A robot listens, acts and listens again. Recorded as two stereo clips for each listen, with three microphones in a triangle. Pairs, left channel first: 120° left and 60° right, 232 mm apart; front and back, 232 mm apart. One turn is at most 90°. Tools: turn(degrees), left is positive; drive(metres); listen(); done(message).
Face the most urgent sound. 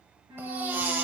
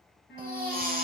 turn(degrees=-90)
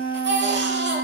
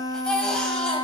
turn(degrees=-85)
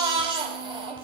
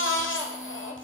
done("Found it: a baby crying, straight ahead.")